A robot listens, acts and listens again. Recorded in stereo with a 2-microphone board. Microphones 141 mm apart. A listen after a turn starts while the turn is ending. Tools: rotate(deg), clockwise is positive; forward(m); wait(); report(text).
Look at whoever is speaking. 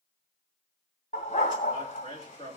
rotate(-40)
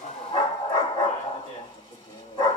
rotate(-95)
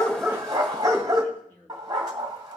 rotate(-15)
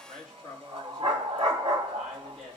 report("Facing the man speaking, 2 to 4 m away.")